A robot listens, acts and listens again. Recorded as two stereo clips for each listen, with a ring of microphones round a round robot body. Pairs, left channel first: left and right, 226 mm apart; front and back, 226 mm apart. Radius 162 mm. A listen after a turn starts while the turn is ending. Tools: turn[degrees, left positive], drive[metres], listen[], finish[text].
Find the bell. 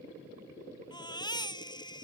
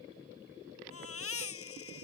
Action: listen[]
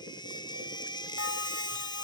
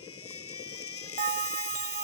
Thought: The bell: 130° left.
Action: turn[130]
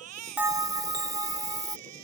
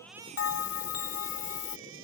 Thought: The bell is now 15° right.
Action: turn[-15]
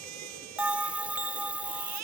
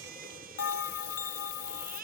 Action: finish[Found it: a bell, straight ahead.]